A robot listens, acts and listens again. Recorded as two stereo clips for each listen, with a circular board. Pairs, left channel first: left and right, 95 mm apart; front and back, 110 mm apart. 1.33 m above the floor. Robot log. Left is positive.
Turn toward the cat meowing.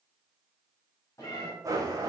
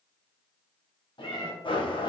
note: The cat meowing: 35° left.
cmd yaw +35
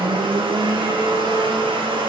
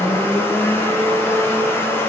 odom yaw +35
cmd idle
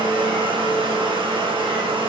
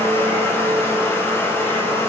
cmd idle
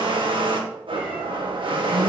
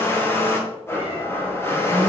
end: Facing where the cat meowing came from. I can't hear it now.